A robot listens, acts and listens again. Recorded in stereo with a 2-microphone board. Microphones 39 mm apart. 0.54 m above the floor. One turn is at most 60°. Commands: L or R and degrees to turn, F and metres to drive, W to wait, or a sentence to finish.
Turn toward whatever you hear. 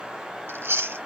R60
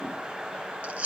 R35
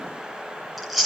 Found it: chewing, straight ahead.